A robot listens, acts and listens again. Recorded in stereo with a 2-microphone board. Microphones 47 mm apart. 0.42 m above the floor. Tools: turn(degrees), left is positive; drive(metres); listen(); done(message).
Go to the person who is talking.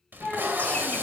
turn(degrees=20)
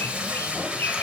listen()
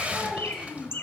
drive(metres=1.0)
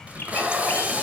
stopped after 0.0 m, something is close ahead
listen()
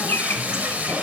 listen()
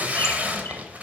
done("I heard a child speaking from this way, but can't make it out now. I did not reach it.")